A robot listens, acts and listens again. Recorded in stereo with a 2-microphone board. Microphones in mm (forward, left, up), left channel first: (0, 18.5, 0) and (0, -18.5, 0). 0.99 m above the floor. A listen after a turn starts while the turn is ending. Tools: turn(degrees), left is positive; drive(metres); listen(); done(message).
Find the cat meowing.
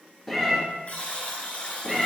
turn(degrees=-30)
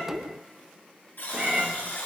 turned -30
turn(degrees=-145)
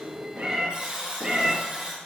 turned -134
turn(degrees=-15)
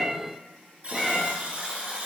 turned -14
done("Facing the cat meowing, 2 to 4 m away.")